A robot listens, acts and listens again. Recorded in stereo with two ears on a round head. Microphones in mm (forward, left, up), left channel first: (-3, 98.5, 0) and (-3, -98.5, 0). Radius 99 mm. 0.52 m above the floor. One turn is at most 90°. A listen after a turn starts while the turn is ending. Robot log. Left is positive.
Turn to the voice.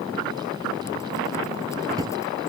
cmd idle
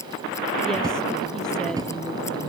cmd idle
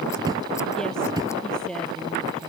cmd yaw +30
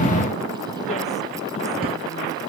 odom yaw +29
cmd idle
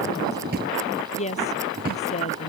note: So it is at 150° left.
cmd yaw +90
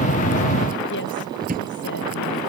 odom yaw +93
note: Nothing new. It was at 55° left.
cmd yaw +55
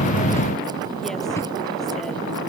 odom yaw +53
cmd idle
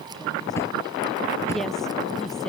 end: Facing where the woman speaking came from. I can't hear it now.